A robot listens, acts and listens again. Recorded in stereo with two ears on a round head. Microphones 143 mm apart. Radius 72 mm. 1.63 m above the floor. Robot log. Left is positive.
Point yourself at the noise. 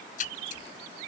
note: The splash: about 55° left or 125° left.
cmd yaw +55
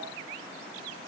cmd idle
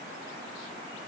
end: I heard a splash, but can't make it out now. It was about straight ahead or 70° left.